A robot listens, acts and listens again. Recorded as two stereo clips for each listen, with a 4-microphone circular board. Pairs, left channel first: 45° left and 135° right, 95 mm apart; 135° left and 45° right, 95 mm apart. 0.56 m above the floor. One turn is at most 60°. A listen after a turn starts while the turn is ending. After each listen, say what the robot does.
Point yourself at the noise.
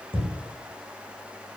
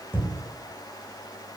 Turn 60° right.
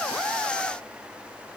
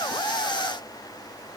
Turn 55° right.
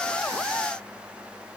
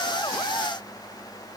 Facing where the thud came from. I can't hear it now.